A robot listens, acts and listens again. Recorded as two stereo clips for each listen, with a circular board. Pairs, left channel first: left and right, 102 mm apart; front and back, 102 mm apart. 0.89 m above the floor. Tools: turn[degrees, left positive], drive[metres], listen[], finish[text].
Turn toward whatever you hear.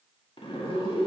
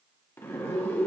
Thought: The zipper: 65° left.
Action: turn[65]
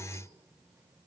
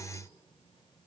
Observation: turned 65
Action: listen[]
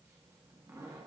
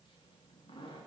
Thought: The zipper is now 30° right.
Action: turn[-30]
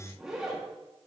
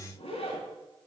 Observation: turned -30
Action: finish[Facing the zipper.]